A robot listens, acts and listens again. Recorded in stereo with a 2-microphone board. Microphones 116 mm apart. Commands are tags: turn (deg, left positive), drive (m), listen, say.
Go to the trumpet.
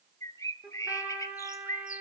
<turn deg="-30"/>
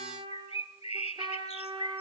<turn deg="-135"/>
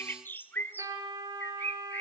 <turn deg="-30"/>
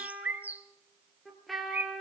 <drive m="1.0"/>
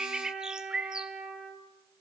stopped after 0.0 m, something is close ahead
<turn deg="-10"/>
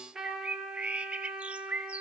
<say>Something is in my way. I am facing the trumpet but have not reached it.</say>